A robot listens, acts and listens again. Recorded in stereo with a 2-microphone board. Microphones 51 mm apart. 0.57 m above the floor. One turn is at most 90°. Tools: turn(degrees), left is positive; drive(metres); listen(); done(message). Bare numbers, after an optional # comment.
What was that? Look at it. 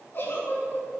# The giggle: about 45° left or 135° left.
turn(45)
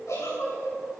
# So it is at 90° left.
turn(90)
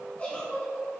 # The giggle is now 25° left.
turn(25)
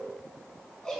# The giggle is now 10° left.
turn(10)
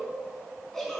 done("Facing the giggle.")